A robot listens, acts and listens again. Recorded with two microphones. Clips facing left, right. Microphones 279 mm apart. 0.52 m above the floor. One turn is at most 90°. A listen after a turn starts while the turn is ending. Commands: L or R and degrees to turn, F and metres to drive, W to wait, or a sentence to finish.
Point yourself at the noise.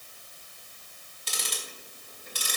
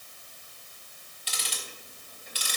L55
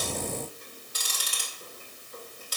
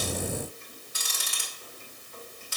L50
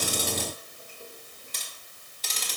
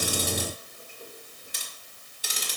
R15
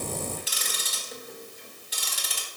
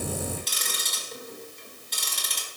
Facing the ticking.